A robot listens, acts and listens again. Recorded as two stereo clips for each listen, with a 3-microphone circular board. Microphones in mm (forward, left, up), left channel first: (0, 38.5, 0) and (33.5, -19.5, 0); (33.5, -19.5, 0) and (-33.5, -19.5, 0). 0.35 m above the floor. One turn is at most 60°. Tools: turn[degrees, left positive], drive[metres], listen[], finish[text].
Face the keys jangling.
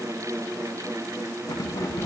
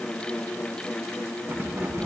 Thought: The keys jangling: 130° left.
Action: turn[60]
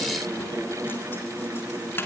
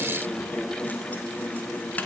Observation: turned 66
Thought: The keys jangling is now 65° left.
Action: turn[60]
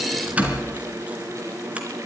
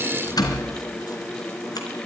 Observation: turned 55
Thought: The keys jangling is now 10° left.
Action: turn[10]
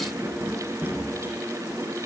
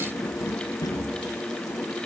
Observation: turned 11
Action: finish[Found it: keys jangling, straight ahead.]